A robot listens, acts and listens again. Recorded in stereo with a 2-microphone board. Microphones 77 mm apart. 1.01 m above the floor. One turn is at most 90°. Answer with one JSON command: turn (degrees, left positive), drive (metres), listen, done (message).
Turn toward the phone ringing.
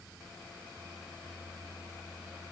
{"listen": true}
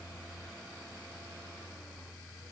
{"listen": true}
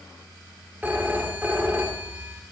{"turn": -25}
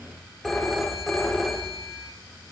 {"done": "Found it: a phone ringing, straight ahead."}